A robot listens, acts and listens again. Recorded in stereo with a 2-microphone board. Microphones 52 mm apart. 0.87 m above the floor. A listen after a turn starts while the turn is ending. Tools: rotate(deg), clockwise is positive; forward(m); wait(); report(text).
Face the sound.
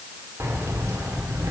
rotate(75)
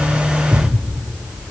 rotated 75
rotate(10)
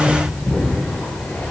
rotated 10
rotate(-15)
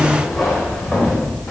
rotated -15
rotate(-10)
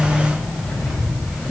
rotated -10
report("Facing the keys jangling, 2 to 4 m away.")